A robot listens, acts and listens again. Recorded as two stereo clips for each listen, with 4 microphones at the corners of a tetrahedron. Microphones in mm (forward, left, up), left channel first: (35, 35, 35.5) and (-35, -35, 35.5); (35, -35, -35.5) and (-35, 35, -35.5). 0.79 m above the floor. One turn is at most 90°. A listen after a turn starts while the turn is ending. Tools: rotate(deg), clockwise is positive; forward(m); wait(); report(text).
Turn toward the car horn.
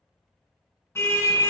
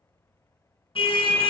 rotate(20)
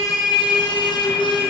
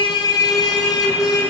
rotate(-10)
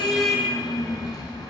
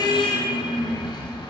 report("Facing the car horn, 2 to 4 m away.")